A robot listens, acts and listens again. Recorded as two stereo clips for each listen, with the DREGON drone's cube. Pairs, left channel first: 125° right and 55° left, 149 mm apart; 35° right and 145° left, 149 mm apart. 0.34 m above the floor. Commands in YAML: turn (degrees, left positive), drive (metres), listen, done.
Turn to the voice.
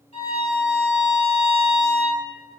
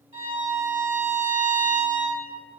listen: true
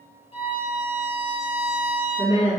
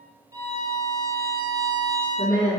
turn: 80
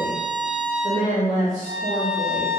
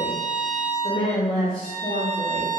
turn: 25
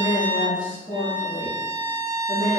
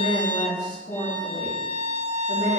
done: "Facing the woman speaking, 2 to 4 m away."